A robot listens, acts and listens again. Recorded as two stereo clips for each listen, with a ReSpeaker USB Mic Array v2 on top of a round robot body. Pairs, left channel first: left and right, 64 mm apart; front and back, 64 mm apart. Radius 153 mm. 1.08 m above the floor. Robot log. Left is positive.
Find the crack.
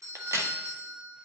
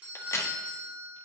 note: The crack: 45° right.
cmd yaw -45
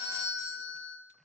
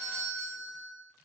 end: I heard a crack from this way, but can't make it out now.